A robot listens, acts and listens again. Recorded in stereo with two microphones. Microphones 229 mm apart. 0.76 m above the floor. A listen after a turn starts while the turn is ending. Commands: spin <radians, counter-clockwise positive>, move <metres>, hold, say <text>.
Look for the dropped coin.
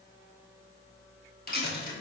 spin 0.79
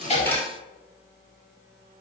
spin 0.17
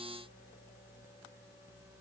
say Facing where the dropped coin came from. I can't hear it now.